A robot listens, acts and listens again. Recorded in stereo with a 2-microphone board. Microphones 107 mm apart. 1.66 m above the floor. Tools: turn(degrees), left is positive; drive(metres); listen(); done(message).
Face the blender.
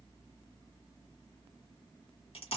listen()
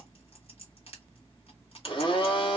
turn(degrees=50)
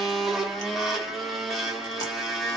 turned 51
done("Facing the blender.")